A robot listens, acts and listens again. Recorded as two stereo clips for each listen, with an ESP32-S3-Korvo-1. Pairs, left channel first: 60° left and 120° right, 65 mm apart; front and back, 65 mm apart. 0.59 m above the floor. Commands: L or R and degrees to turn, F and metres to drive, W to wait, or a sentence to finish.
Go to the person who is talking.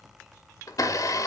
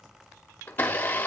W
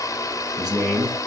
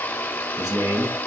L155
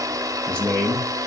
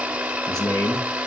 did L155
R10
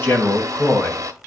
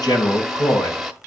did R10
F1.0
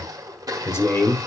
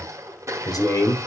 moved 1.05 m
L10
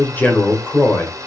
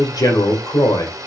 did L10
F1.0
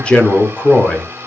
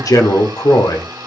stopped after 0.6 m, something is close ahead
R10
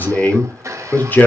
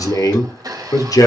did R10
I am next to the man speaking.